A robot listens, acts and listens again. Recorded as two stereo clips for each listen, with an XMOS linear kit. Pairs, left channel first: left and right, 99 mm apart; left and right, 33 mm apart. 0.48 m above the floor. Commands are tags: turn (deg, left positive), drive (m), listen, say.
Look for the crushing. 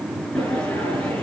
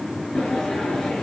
<listen/>
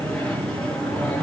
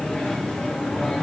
<listen/>
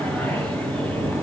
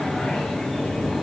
<say>I can't make out crushing, only a sliding door.</say>